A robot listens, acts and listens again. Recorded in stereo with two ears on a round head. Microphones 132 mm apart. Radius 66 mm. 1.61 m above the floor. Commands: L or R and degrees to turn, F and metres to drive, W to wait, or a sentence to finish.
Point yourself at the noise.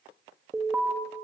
R30
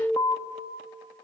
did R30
L25
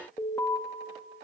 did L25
L20
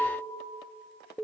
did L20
Found it: an alarm, straight ahead.